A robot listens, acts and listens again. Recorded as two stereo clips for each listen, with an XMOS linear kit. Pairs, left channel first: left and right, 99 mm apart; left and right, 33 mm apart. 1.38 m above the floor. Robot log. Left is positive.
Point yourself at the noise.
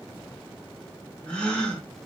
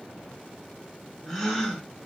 cmd yaw +30
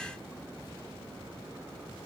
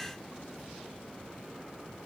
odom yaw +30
cmd idle
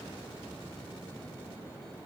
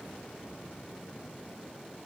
end: I heard a gasp, but can't make it out now. It was about 20° right or 140° left.